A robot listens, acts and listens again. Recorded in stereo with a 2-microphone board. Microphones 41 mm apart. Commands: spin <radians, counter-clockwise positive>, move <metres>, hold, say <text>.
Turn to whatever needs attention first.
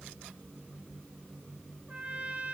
hold
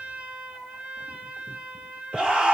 spin -0.35
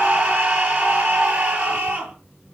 spin -2.44
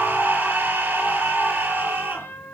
spin -0.79
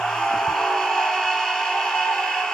spin 0.26
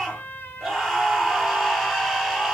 say Facing the scream, over 4 m away.